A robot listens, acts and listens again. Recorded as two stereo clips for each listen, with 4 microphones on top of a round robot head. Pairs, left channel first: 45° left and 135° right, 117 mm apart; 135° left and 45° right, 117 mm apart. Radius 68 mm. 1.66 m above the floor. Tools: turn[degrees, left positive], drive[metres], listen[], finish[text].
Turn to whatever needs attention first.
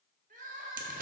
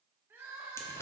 Thought: The crying: 115° right.
Action: turn[-115]
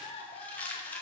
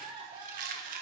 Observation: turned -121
Action: finish[Facing the crying, 1 to 2 m away.]